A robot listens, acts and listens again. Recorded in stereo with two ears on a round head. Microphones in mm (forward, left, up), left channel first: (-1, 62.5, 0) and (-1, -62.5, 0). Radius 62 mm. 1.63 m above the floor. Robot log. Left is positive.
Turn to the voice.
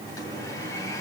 cmd idle
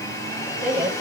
cmd yaw -30
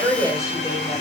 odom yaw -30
note: So it is at 25° left.
cmd yaw +25
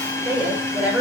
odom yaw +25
end: Facing the woman speaking, over 4 m away.